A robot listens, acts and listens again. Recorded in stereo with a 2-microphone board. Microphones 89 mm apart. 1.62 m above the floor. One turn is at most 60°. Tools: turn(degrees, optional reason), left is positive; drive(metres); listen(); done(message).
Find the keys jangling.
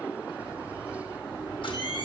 turn(degrees=-30, reason="The keys jangling: about 30° right or 150° right.")
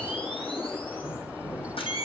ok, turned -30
turn(degrees=10, reason="So it is at 10° left.")
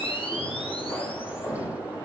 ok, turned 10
turn(degrees=10, reason="The keys jangling is now 10° left.")
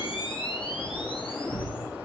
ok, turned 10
done("Found it: keys jangling, straight ahead.")